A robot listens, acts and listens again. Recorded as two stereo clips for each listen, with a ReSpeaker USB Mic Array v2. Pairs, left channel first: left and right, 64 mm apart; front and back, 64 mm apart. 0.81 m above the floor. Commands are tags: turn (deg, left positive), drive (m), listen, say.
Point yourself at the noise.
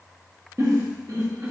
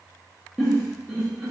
<turn deg="-90"/>
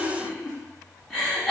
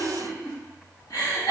<turn deg="10"/>
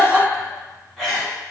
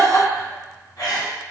<say>Found it: a giggle, straight ahead, 1 to 2 m away.</say>